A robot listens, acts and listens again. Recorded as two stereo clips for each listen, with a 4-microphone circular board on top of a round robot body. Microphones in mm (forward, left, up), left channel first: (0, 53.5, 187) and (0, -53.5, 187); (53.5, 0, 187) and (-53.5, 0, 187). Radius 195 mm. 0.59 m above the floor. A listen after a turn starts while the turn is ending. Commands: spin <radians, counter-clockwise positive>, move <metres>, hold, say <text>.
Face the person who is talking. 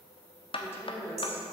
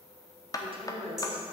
spin 2.71
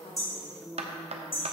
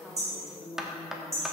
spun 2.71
say Found it: a woman speaking, straight ahead.